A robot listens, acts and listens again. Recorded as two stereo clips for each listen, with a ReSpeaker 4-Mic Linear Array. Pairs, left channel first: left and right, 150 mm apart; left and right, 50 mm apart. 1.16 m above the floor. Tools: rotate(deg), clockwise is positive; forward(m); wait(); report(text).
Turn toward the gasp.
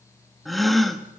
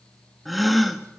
rotate(-30)
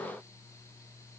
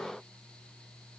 wait()
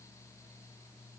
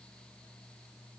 report("I heard a gasp, but can't make it out now. It was about 30° right or 150° left.")